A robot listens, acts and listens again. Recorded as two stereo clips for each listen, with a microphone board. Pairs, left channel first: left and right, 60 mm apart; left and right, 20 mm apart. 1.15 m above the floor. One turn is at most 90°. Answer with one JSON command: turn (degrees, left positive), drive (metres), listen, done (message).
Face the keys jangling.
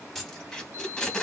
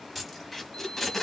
{"turn": 30}
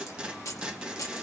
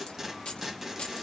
{"turn": 90}
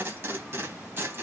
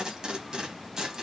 {"turn": 20}
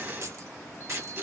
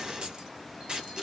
{"turn": -60}
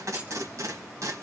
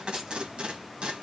{"listen": true}
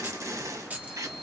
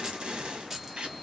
{"turn": -25}
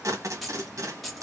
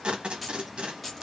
{"done": "Found it: keys jangling, straight ahead."}